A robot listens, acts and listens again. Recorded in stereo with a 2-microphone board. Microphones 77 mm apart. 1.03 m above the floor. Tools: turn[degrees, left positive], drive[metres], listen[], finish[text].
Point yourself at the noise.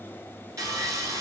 Thought: The sawing: about 45° right or 135° right.
Action: turn[-45]
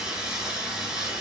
Thought: So it is at 10° right.
Action: turn[-10]
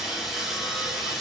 Action: finish[Facing the sawing.]